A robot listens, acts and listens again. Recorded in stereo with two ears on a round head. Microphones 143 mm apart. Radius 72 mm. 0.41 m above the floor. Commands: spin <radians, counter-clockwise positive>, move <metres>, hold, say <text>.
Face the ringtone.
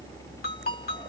spin 1.13
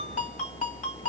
spin 0.79
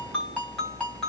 say Facing the ringtone.